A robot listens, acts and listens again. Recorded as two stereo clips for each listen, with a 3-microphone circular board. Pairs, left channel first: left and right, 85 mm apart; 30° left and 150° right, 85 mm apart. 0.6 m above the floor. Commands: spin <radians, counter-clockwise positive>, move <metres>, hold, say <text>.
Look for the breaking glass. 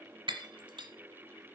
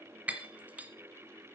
spin -1.31
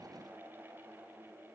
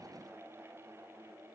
say Facing where the breaking glass came from. I can't hear it now.